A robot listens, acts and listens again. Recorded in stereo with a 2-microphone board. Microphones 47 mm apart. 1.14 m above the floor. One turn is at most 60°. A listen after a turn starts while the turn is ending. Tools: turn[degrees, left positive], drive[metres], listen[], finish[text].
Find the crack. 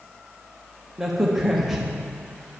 Action: turn[-30]
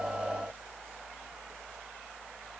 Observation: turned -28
Action: listen[]
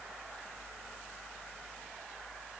Action: finish[I heard a crack, but can't make it out now. It was about 25° left or 150° right.]